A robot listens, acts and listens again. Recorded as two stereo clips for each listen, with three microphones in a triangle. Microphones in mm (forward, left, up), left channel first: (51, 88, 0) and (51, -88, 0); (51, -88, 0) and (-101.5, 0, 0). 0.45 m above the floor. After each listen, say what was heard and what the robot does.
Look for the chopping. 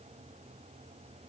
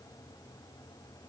Keep listening.
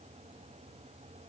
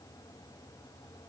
Keep listening.
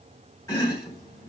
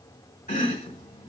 The chopping: 15° left. Turn 15° left.
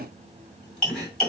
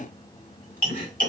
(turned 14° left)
Facing the chopping, 1 to 2 m away.